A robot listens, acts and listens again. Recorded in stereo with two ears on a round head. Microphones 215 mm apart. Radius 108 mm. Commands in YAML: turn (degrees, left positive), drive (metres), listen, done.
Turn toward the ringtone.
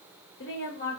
listen: true
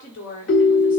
turn: 50
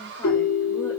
turn: 70
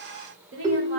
turn: -20
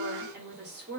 listen: true
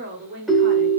done: "Facing the ringtone, 1 to 2 m away."